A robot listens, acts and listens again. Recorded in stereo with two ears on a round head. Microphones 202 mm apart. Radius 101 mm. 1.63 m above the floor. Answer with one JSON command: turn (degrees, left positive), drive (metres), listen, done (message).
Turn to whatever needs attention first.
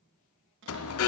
{"turn": 70}
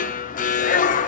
{"turn": 35}
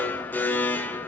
{"turn": 10}
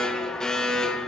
{"done": "Facing the alarm."}